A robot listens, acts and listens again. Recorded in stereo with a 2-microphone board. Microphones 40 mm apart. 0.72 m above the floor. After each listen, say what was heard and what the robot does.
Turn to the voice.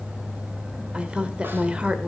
The woman speaking: about 30° right or 150° right. Turn 30° right.
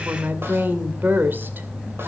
So it is at 120° right. Turn 120° right.
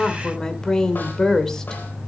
The woman speaking is now 15° left. Turn 15° left.
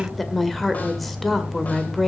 Facing the woman speaking, 2 to 4 m away.